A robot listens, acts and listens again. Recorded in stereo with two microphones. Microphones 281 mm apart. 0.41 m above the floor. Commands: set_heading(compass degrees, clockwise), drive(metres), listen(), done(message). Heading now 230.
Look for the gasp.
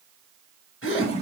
set_heading(190)
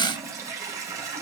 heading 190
listen()
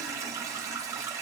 done("I heard a gasp, but can't make it out now. It was about straight ahead or 100° left.")